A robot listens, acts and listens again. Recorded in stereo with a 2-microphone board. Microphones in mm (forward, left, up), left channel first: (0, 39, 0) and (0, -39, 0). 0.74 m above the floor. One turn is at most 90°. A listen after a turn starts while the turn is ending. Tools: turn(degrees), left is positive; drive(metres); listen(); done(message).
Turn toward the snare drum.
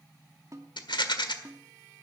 turn(degrees=-45)
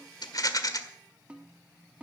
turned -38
turn(degrees=-20)
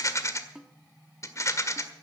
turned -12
done("Facing the snare drum.")